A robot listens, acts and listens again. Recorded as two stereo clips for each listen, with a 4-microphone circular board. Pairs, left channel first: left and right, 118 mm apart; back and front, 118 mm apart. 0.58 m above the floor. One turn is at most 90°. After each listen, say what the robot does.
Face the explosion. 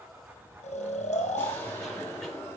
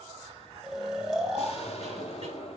Turn 90° left.
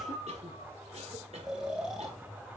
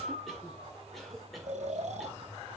Turn 75° left.
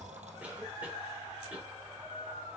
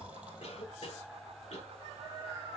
I heard an explosion from this way, but can't make it out now.